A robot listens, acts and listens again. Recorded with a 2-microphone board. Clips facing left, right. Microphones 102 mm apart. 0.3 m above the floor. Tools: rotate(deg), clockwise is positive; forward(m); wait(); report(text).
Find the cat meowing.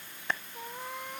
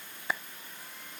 rotate(-60)
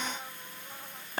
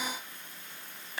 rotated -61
wait()
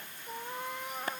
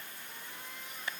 rotate(-55)
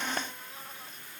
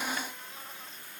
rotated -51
wait()
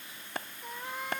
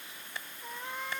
report("Found it: a cat meowing, straight ahead.")